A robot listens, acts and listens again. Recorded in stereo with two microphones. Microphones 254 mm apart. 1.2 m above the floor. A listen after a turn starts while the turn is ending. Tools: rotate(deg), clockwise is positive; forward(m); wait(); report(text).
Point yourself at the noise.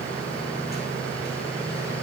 wait()
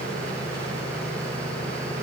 wait()
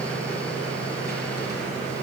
report("I can't make out anything.")